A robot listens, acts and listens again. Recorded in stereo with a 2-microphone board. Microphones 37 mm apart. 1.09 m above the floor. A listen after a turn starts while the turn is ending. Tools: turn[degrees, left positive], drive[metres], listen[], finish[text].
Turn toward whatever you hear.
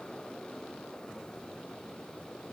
Action: listen[]
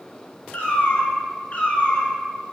Thought: The cat meowing: about 35° left or 145° left.
Action: turn[35]
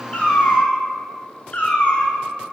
Thought: The cat meowing: about 35° left or 145° left.
Action: turn[35]
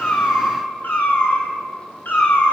Thought: So it is at 125° left.
Action: turn[125]
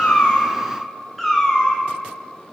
Action: finish[Found it: a cat meowing, straight ahead, 1 to 2 m away.]